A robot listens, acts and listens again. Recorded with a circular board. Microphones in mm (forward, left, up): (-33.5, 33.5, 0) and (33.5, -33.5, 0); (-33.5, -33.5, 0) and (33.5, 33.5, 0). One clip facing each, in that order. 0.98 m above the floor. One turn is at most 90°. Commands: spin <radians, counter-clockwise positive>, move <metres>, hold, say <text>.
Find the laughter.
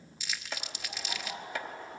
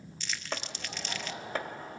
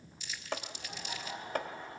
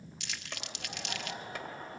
say Found it: laughter, straight ahead, over 4 m away.